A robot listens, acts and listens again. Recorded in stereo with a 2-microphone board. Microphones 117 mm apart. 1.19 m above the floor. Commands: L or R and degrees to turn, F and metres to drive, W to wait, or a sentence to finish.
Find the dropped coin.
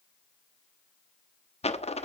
L60
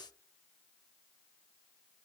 W
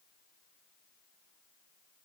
I heard a dropped coin, but can't make it out now. It was about straight ahead or 60° left.